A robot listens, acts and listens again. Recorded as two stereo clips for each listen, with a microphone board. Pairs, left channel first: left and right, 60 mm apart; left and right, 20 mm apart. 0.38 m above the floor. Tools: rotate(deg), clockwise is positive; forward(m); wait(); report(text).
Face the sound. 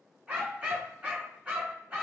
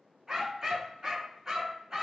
rotate(20)
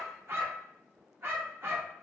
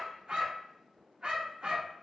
rotate(140)
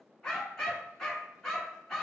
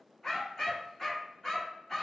rotate(-10)
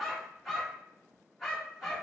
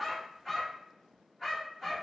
report("Facing the dog barking, 1 to 2 m away.")